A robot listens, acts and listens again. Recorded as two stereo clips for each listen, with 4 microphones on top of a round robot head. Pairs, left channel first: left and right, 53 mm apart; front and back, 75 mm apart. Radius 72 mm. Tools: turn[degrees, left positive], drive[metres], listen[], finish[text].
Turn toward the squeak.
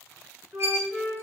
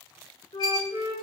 Thought: The squeak: 55° right.
Action: turn[-55]
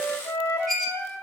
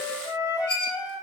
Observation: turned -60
Action: finish[Found it: a squeak, straight ahead, 1 to 2 m away.]